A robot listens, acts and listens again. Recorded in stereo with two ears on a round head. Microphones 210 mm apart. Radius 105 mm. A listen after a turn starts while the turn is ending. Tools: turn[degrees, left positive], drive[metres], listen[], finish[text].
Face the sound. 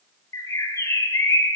Action: turn[30]
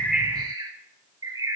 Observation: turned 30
Thought: So it is at 15° right.
Action: turn[-15]
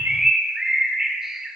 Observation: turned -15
Action: finish[Found it: a bird, straight ahead, 2 to 4 m away.]